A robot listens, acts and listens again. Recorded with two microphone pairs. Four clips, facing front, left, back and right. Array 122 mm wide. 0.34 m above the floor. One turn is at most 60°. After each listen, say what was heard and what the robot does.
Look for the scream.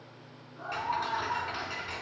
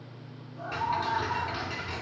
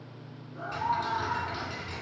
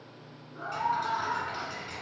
The scream: 135° right. Turn 60° right.
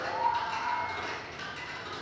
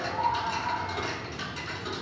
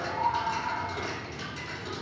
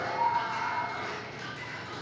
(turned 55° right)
The scream is now 80° right. Turn 60° right.
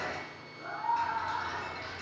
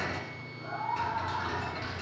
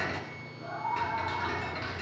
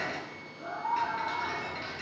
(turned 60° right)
The scream is now 20° right. Turn 20° right.
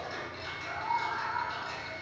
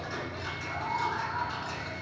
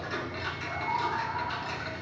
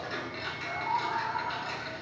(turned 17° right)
Found it: a scream, straight ahead.